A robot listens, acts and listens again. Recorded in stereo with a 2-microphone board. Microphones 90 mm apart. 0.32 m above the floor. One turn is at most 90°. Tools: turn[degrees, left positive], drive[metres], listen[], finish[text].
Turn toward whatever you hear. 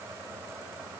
Action: listen[]
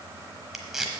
Action: turn[-30]
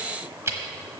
Thought: So it is at 145° right.
Action: turn[-90]
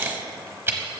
Thought: The tape being pulled is now 30° right.
Action: turn[-30]
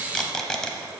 Thought: The tape being pulled is now 10° left.
Action: turn[10]
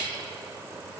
Action: listen[]
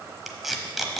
Action: finish[Facing the tape being pulled, 1 to 2 m away.]